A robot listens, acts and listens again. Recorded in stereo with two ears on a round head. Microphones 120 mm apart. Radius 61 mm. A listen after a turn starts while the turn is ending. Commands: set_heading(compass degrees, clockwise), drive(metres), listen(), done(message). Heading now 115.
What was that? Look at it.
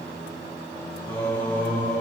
set_heading(85)
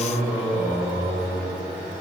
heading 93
set_heading(103)
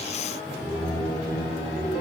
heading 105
done("Facing the singing, over 4 m away.")